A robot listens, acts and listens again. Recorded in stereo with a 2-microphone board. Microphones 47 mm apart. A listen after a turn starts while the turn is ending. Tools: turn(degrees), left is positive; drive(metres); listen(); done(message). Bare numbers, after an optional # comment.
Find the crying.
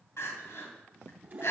# The crying: about 75° left or 105° left.
turn(75)
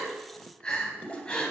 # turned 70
# So it is at 20° left.
turn(20)
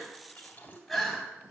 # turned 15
done("Facing the crying, 2 to 4 m away.")